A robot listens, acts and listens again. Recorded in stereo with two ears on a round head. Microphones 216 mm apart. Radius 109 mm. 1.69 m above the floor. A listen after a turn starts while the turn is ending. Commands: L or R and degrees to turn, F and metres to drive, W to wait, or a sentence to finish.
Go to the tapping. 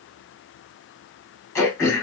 W
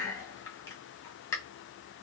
W
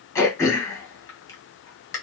I can't make out tapping to turn to.